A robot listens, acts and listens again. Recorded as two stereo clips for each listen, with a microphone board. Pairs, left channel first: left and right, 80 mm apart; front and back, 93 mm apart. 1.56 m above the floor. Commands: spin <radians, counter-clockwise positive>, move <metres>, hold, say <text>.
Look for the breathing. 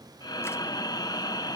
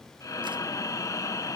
spin 0.96
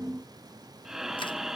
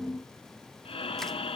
say Found it: breathing, straight ahead.